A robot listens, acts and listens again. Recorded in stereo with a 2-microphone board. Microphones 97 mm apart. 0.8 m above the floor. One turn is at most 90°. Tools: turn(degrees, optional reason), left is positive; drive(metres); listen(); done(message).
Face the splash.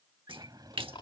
turn(degrees=-75, reason="The splash: about 75° right or 105° right.")
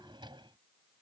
listen()
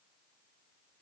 done("I heard a splash, but can't make it out now. It was about straight ahead or 30° right.")